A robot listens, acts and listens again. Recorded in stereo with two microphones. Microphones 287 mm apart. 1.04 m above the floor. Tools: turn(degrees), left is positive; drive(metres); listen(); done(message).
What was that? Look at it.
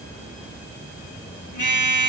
turn(degrees=90)
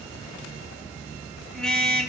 done("Found it: a car horn, straight ahead, 2 to 4 m away.")